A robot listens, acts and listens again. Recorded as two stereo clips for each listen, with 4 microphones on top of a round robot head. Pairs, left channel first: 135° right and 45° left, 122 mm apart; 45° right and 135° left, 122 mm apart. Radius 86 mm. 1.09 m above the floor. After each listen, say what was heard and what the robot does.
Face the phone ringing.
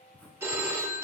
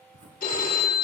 The phone ringing: 30° right. Turn 30° right.
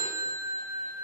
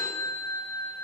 The phone ringing is now 10° left. Turn 10° left.
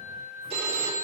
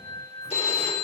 Found it: a phone ringing, straight ahead, 2 to 4 m away.